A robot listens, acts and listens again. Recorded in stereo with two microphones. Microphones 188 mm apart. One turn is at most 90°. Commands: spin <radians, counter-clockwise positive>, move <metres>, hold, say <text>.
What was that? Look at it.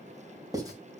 spin -0.35
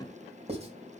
spin -1.57
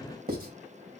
spin -1.13
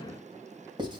spin -0.52
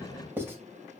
spin -0.26
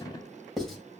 say Found it: writing, straight ahead, 2 to 4 m away.